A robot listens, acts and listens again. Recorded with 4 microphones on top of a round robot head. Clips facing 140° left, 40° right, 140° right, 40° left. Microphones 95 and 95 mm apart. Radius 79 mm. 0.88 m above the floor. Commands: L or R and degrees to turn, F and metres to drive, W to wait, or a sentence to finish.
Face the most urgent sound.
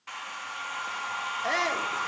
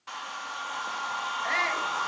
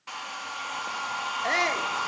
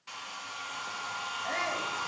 R160
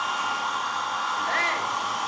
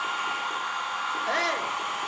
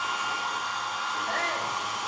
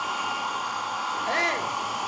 L25
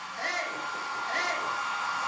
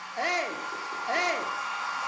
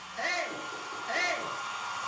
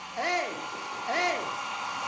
Found it: a shout, straight ahead, 2 to 4 m away.